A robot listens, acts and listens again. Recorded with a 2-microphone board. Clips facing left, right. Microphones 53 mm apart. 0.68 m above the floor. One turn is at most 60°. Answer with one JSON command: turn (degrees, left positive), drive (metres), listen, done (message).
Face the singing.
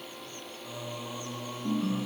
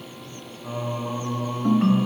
{"turn": -40}
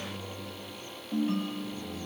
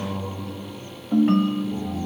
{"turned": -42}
{"turn": -60}
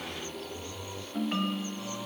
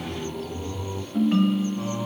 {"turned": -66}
{"turn": -30}
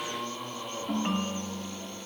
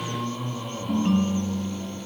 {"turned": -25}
{"done": "Found it: singing, straight ahead."}